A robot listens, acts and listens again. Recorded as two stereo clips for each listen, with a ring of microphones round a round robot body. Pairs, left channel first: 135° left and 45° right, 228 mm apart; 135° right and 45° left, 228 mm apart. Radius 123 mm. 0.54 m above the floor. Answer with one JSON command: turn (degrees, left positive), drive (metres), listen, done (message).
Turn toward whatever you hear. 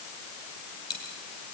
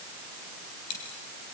{"turn": -150}
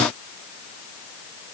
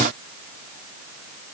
{"done": "Facing where the dropped coin came from. I can't hear it now."}